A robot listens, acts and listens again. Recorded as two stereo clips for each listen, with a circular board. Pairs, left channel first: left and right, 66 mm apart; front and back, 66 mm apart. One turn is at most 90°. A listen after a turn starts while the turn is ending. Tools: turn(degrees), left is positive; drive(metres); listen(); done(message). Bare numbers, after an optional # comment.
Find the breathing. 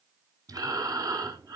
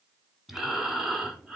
# The breathing: 95° right.
turn(-90)
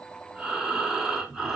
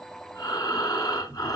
done("Found it: breathing, straight ahead.")